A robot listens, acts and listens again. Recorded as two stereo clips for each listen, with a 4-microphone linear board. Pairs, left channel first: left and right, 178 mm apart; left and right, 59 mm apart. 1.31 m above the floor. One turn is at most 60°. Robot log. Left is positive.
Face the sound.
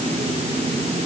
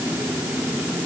cmd idle
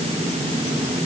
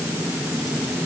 cmd idle
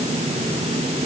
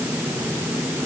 end: I can't make out anything.